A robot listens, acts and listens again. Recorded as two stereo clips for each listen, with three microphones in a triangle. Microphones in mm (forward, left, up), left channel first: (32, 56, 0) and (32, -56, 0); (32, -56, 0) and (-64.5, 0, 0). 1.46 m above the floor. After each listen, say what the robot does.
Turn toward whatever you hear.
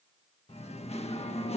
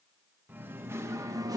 Turn 100° left.
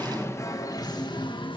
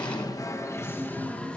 Turn 50° left.
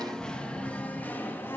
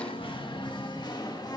Turn 20° left.
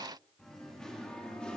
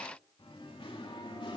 Turn 10° left.
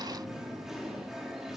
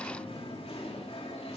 Found it: singing, straight ahead.